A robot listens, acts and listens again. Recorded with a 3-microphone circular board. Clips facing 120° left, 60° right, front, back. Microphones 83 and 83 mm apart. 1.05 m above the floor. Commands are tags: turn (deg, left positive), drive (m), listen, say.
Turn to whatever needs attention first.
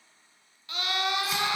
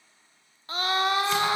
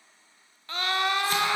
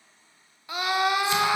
<turn deg="-105"/>
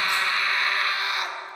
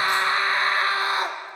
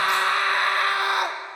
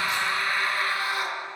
<turn deg="-10"/>
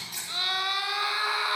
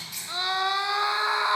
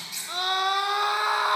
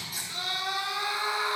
<say>Facing the scream.</say>